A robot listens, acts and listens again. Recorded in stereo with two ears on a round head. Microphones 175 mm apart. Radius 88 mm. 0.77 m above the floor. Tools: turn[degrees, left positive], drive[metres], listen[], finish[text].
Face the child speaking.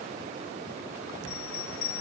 Action: listen[]
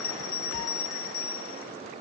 Action: listen[]
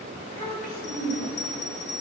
Thought: The child speaking: about 45° left or 135° left.
Action: turn[45]
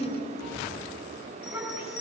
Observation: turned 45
Action: finish[Facing the child speaking.]